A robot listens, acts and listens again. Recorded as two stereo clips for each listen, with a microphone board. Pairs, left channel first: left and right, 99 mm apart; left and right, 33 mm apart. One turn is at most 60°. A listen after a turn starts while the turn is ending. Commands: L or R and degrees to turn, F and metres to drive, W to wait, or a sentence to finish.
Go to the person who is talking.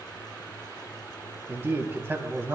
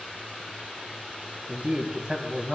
R20
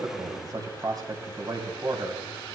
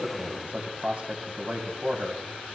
R60
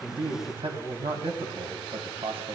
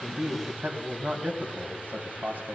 R60
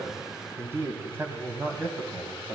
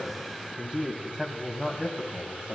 R25
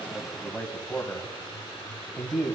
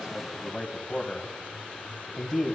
F1.0
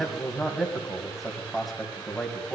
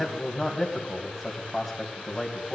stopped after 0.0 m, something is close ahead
Something is in my way. I am facing the man speaking but have not reached it.